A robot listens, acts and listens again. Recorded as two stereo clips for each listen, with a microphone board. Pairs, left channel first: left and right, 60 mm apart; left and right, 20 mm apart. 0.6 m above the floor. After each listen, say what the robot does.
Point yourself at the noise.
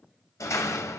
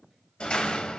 Turn 70° left.
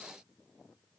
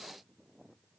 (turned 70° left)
Keep listening.
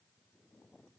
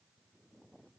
I heard a door slam, but can't make it out now. It was about straight ahead or 40° left.